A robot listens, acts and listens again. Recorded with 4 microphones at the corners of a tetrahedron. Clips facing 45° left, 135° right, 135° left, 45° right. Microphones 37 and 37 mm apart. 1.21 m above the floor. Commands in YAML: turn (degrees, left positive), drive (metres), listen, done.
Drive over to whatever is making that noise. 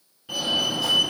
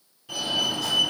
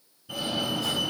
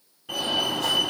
turn: -25
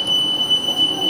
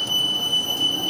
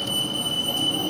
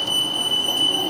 drive: 1.0
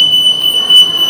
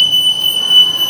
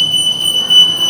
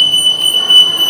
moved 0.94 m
drive: 1.0
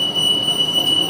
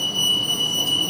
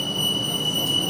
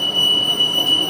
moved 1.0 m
turn: 10
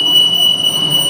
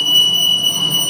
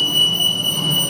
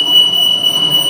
drive: 1.0
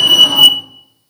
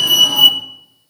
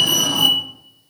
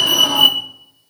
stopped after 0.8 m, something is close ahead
turn: 15
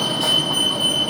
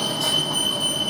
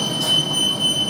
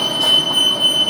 done: "I am next to the fire alarm."